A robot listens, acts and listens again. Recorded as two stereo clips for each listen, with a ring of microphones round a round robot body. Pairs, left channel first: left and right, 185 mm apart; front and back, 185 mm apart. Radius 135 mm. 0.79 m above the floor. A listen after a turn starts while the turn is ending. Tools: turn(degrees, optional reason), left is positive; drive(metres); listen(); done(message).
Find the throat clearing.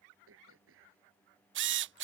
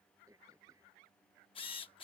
turn(degrees=-100, reason="The throat clearing: 100° right.")
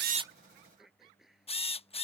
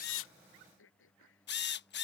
done("Found it: throat clearing, straight ahead.")